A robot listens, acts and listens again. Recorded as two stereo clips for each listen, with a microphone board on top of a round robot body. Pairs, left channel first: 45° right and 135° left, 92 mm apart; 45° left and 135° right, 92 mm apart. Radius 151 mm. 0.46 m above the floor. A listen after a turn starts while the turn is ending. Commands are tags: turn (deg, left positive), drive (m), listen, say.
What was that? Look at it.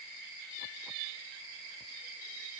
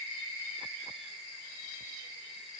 <listen/>
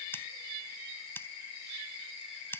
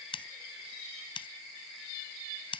<turn deg="20"/>
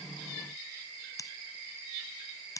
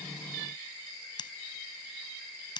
<turn deg="10"/>
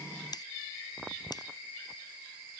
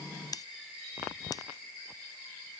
<say>Found it: scissors, straight ahead.</say>